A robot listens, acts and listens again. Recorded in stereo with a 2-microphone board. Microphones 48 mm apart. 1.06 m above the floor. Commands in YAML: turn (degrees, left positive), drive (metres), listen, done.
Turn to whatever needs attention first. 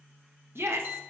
turn: -60
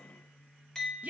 turn: -40
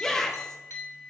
turn: 15
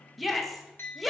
done: "Found it: a shout, straight ahead, under 1 m away."